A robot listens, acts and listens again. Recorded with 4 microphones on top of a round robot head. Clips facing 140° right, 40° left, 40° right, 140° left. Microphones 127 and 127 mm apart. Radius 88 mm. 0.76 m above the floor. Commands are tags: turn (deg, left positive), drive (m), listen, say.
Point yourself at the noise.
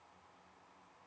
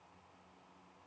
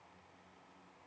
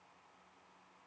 <listen/>
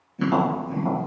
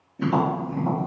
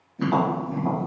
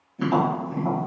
<turn deg="-140"/>
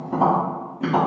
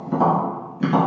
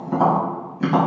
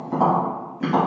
<turn deg="25"/>
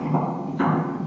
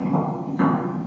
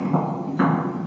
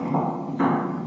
<say>Found it: tapping, straight ahead.</say>